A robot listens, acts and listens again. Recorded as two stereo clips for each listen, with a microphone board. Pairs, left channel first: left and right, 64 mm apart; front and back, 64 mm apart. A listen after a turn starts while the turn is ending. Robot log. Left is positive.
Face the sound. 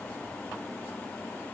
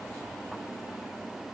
cmd idle
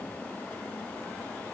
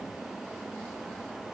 cmd idle
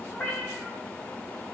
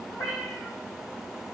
note: The cat meowing: 30° left.
cmd yaw +30
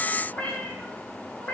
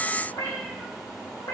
note: The cat meowing is now 15° left.
cmd yaw +15
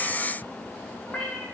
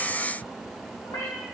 end: Facing the cat meowing.